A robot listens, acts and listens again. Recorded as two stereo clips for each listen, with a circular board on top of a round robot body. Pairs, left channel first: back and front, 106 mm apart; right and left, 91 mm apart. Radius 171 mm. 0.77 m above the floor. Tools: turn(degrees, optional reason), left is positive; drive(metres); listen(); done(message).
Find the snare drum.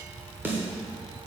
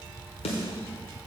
turn(degrees=-75, reason="The snare drum: 75° right.")
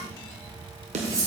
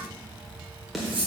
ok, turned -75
done("Facing the snare drum, 1 to 2 m away.")